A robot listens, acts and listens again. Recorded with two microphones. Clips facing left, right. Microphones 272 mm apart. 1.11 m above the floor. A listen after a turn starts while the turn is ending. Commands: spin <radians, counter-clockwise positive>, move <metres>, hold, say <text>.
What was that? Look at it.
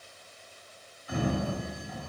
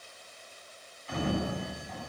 spin 0.52
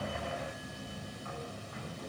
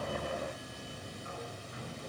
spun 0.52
spin -0.35
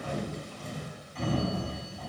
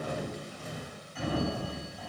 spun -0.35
say Facing the sliding door.